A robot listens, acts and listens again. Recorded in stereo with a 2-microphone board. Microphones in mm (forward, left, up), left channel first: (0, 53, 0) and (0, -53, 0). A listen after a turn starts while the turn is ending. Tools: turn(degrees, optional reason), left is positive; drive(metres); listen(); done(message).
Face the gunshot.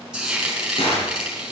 turn(degrees=60, reason="The gunshot: about 60° left or 120° left.")
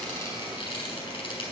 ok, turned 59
listen()
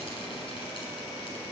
done("I heard a gunshot, but can't make it out now. It was about straight ahead or 65° left.")